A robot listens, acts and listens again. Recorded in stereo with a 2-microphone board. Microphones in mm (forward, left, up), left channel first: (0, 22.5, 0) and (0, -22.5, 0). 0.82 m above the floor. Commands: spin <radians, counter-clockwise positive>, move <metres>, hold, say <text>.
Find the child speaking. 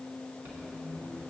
hold
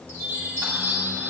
hold
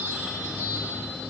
say I can't make out a child speaking, only a squeak and a chime.